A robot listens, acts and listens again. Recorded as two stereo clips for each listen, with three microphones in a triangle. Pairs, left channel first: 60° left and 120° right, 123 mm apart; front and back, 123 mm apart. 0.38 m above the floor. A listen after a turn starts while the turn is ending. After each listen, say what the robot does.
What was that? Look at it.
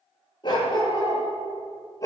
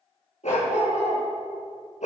Facing the dog barking, 2 to 4 m away.